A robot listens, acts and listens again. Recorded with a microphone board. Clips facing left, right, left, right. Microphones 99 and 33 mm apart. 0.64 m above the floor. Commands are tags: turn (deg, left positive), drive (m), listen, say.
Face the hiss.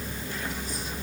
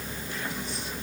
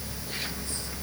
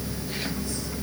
<listen/>
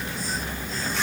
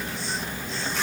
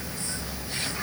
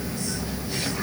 <listen/>
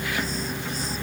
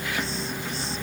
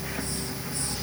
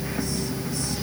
<say>I can't make out a hiss.</say>